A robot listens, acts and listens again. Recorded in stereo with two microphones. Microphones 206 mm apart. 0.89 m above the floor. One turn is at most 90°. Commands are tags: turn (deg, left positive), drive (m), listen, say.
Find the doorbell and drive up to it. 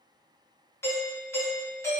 <turn deg="30"/>
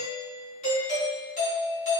<turn deg="90"/>
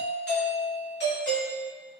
<turn deg="80"/>
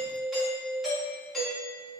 <drive m="1.0"/>
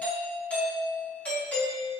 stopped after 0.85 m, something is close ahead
<turn deg="10"/>
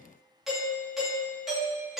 <say>Arrived at the doorbell, straight ahead.</say>